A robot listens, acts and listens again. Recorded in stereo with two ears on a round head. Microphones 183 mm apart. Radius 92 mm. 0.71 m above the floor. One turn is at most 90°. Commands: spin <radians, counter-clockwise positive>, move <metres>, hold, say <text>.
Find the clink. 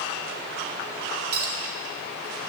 spin -1.57
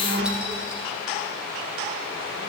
hold
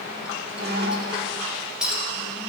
say Facing the clink, 1 to 2 m away.